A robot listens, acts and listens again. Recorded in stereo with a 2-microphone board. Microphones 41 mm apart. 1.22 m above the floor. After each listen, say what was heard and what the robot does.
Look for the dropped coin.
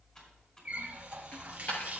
The dropped coin: about 40° left or 140° left. Turn 40° left.
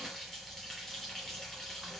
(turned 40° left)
Keep listening.
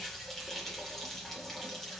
I heard a dropped coin, but can't make it out now. It was about straight ahead or 100° left.